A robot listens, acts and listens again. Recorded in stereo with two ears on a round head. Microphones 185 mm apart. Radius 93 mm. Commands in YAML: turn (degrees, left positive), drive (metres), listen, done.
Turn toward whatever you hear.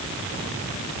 listen: true
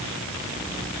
listen: true
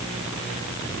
done: "I can't make out anything."